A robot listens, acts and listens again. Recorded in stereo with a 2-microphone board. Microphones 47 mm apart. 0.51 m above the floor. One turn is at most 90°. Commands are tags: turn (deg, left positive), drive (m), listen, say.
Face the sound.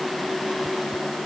<listen/>
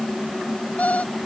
<turn deg="30"/>
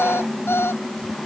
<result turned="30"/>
<turn deg="90"/>
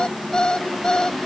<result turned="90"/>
<turn deg="15"/>
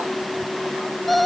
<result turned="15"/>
<say>Found it: an alarm clock, straight ahead.</say>